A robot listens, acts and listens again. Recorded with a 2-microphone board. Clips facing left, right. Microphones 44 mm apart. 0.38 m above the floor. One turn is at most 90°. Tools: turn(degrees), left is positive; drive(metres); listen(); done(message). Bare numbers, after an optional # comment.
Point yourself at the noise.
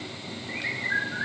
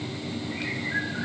# The bird: about 45° left or 135° left.
turn(45)
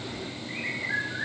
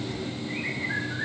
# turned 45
done("Found it: a bird, straight ahead, over 4 m away.")